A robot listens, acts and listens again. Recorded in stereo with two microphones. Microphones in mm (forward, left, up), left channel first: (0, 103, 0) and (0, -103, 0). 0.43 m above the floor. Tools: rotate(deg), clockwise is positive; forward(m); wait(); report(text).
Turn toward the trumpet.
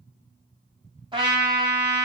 rotate(25)
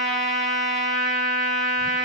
report("Facing the trumpet.")